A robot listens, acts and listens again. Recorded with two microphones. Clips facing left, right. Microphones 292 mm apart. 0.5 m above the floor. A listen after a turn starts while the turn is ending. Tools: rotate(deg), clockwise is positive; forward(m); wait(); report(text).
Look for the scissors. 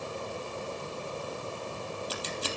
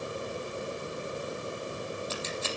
rotate(-40)
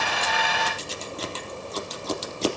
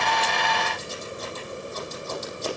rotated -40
rotate(-100)
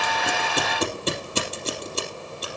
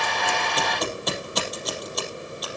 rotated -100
rotate(-30)
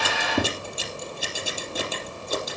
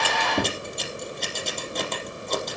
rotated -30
report("Found it: scissors, straight ahead.")